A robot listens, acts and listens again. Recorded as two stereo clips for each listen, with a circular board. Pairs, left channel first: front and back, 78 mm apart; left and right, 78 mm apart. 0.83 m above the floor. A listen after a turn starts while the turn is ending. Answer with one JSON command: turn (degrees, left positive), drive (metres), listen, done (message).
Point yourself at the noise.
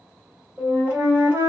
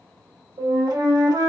{"turn": -115}
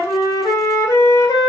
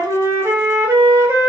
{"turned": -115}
{"turn": -30}
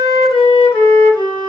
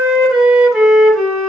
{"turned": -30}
{"done": "Facing the flute, 1 to 2 m away."}